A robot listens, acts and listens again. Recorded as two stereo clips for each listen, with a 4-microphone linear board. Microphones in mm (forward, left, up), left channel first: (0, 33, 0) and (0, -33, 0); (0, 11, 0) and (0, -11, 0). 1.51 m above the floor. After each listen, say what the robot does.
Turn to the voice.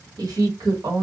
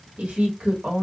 Turn 65° right.
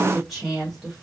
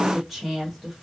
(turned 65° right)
Facing the woman speaking.